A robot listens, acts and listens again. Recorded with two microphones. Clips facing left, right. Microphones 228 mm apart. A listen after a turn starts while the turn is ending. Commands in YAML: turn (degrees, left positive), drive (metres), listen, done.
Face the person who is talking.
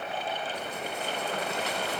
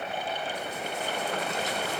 listen: true
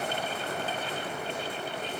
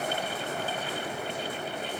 listen: true
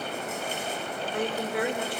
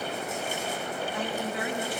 turn: 65
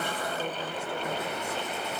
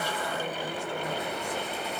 listen: true
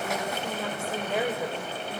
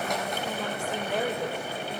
turn: 10
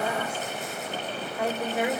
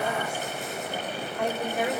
done: "Facing the woman speaking."